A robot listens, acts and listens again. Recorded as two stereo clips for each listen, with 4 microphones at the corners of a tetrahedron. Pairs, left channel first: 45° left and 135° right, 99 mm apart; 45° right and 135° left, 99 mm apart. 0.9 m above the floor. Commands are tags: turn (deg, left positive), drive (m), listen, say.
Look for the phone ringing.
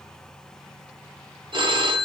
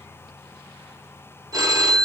<turn deg="-170"/>
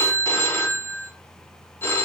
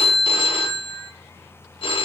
<turn deg="-20"/>
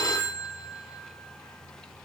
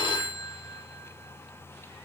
<turn deg="-10"/>
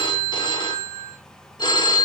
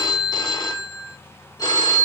<say>Facing the phone ringing, under 1 m away.</say>